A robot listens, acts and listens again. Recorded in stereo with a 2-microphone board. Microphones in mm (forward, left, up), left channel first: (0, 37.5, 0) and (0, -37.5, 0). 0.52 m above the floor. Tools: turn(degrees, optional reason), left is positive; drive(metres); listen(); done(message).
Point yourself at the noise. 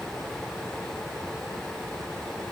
listen()
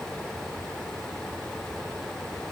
listen()
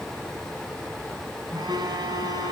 turn(degrees=-90)
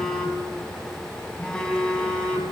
turn(degrees=10, reason="So it is at 10° left.")
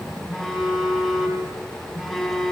done("Facing the phone buzzing.")